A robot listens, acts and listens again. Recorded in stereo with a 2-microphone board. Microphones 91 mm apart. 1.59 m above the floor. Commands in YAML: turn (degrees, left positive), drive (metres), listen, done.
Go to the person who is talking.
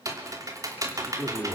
turn: -25
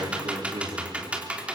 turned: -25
turn: -130
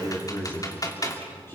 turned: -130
turn: 25
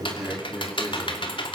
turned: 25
drive: 1.0
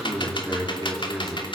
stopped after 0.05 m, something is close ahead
done: "Something is in my way. I am facing the man speaking but have not reached it."